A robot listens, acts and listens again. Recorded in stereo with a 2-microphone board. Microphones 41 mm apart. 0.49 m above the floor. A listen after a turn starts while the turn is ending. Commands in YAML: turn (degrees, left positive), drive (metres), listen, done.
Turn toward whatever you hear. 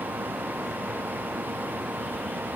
listen: true
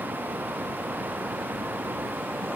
listen: true
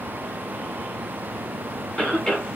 turn: 30
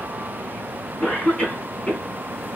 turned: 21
turn: 150
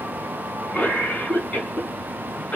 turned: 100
turn: 50
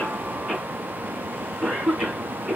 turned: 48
done: "Facing the cough."